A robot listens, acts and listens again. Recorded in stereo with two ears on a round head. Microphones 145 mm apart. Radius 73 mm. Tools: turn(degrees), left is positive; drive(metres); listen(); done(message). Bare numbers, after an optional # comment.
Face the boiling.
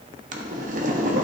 # The boiling: about 50° right or 130° right.
turn(-50)
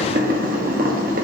# So it is at 70° right.
turn(-70)
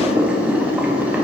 # The boiling is now 10° right.
turn(-10)
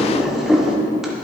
done("Facing the boiling.")